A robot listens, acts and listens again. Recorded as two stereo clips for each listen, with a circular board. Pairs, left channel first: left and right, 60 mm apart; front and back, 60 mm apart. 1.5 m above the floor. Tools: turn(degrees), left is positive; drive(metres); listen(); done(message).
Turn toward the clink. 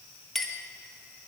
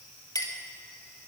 done("Facing the clink.")